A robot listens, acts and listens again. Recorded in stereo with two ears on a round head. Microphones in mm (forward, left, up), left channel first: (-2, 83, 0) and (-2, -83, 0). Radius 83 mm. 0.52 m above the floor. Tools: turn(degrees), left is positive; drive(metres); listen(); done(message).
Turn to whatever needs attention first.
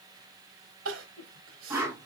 turn(degrees=-90)
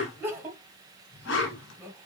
turn(degrees=-10)
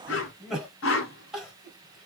done("Facing the crying.")